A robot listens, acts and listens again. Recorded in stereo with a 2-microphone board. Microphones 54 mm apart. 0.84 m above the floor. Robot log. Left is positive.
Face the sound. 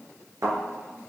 note: The thud: about 75° right or 105° right.
cmd yaw -75
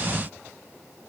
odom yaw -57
cmd idle
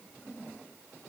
end: I heard a thud, but can't make it out now. It was about 15° right or 50° right.